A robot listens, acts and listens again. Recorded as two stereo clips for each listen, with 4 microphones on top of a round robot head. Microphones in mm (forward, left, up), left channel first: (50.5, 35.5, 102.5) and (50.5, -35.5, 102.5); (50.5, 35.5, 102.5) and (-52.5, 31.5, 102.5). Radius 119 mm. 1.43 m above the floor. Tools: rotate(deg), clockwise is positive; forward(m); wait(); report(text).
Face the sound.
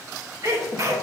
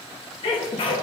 rotate(40)
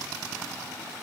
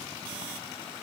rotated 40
report("I heard a sneeze from this way, but can't make it out now.")